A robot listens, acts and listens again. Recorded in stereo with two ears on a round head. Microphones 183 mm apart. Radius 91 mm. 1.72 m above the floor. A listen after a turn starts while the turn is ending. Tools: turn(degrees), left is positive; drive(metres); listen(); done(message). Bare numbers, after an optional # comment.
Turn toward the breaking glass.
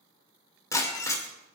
# The breaking glass: about 15° left or 165° left.
turn(15)
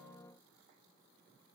listen()
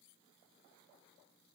done("I heard breaking glass, but can't make it out now. It was about straight ahead or 150° left.")